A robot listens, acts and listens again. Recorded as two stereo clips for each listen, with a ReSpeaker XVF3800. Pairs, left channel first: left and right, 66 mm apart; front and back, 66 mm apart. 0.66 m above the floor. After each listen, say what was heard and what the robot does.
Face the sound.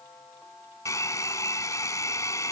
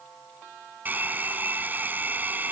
The hair dryer: 120° left. Turn 120° left.
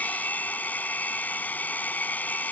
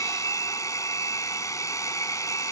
The hair dryer is now 25° left. Turn 25° left.
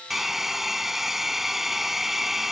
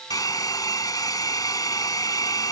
Found it: a hair dryer, straight ahead.